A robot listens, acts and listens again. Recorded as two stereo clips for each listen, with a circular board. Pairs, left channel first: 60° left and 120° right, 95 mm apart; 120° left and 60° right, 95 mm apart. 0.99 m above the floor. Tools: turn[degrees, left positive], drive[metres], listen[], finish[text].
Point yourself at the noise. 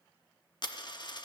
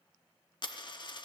Thought: The dropped coin: 90° left.
Action: turn[90]
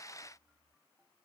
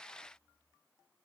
Action: finish[Facing where the dropped coin came from. I can't hear it now.]